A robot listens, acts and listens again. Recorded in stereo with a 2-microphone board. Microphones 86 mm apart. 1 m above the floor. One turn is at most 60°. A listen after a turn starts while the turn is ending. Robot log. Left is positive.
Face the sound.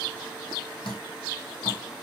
note: The dripping: about 75° left or 105° left.
cmd yaw +60
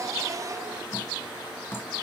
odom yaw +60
note: So it is at 30° left.
cmd yaw +30
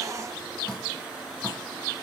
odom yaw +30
note: The dripping is now 10° left.
cmd yaw +10
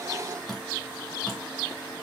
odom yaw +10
end: Found it: dripping, straight ahead.